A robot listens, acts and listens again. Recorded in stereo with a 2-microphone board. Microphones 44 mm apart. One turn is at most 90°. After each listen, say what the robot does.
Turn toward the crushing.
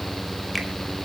Keep listening.
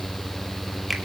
Keep listening.
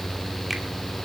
I can't make out crushing to turn to.